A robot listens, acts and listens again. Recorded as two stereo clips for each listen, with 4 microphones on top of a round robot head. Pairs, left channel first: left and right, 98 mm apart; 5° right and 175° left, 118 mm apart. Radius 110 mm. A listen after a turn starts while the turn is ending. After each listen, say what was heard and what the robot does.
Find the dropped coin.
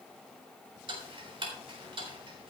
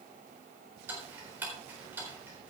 Keep listening.
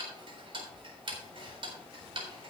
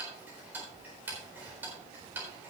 Keep listening.
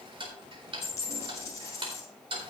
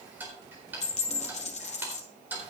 The dropped coin: 20° left. Turn 20° left.
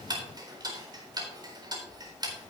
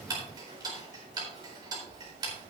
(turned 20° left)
I heard a dropped coin from this way, but can't make it out now.